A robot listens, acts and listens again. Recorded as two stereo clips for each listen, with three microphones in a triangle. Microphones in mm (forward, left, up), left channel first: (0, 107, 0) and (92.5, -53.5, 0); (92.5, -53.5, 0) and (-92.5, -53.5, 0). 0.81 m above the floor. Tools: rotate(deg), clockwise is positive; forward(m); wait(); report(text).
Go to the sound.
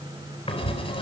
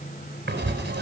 rotate(-180)
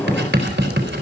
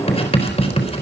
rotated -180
rotate(55)
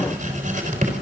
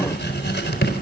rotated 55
rotate(15)
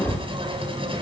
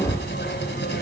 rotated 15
forward(1.0)
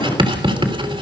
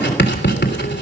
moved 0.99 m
forward(1.0)
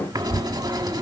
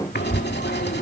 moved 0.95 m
forward(1.0)
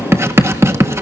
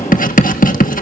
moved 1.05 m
rotate(-10)
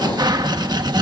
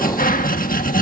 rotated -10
forward(1.0)
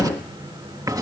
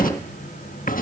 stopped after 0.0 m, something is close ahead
report("I am next to the writing.")